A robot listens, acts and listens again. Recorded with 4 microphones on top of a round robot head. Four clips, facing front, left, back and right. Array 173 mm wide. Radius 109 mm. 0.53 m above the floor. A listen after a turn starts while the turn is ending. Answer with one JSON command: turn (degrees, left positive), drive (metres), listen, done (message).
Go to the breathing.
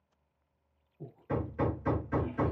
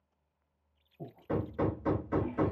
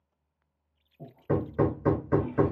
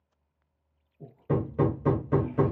{"turn": 140}
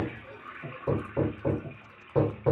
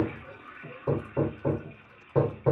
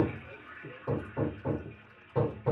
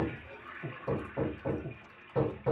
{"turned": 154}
{"turn": -15}
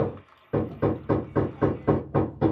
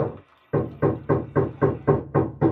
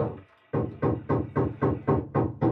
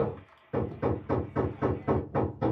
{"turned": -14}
{"listen": true}
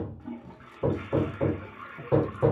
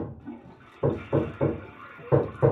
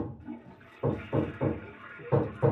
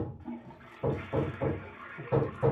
{"listen": true}
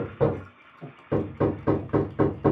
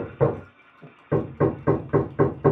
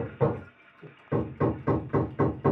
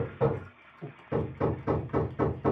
{"drive": 1.0}
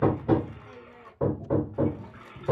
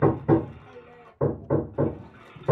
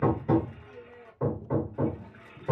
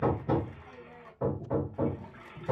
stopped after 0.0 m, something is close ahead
{"listen": true}
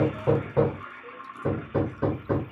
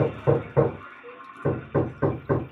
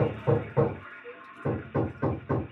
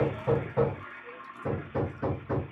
{"listen": true}
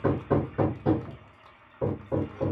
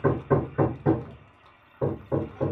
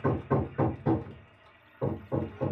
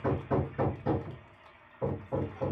{"done": "Facing where the breathing came from. I can't hear it now. I did not reach it."}